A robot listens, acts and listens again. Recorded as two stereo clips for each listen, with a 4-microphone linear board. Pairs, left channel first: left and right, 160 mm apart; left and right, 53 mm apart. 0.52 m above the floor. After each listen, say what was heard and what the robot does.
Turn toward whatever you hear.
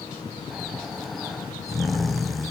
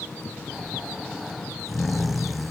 Turn 30° left.
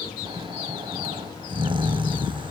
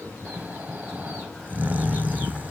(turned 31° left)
So it is at 30° right. Turn 30° right.
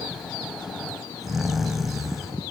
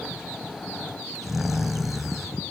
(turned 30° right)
Found it: snoring, straight ahead, under 1 m away.